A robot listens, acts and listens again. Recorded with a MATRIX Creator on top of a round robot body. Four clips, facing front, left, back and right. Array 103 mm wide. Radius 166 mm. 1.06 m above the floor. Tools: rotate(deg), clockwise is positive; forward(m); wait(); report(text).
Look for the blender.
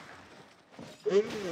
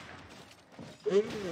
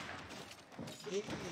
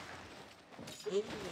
rotate(-35)
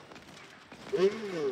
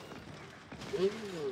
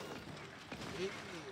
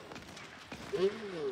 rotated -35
report("Found it: a blender, straight ahead.")